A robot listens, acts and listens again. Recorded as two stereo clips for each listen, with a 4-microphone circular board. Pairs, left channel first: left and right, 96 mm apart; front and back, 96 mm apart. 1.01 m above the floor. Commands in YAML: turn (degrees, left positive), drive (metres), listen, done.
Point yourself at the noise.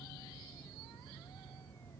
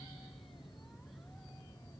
listen: true
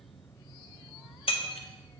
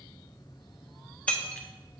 turn: 75
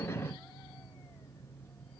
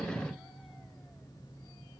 done: "I heard breaking glass from this way, but can't make it out now."